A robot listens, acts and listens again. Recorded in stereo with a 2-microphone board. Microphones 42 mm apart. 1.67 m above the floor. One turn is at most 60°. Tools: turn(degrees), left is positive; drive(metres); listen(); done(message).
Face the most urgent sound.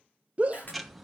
turn(degrees=-35)
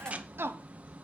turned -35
turn(degrees=-60)
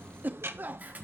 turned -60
turn(degrees=-55)
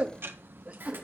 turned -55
turn(degrees=-30)
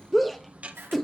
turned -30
done("Found it: a shout, straight ahead, under 1 m away.")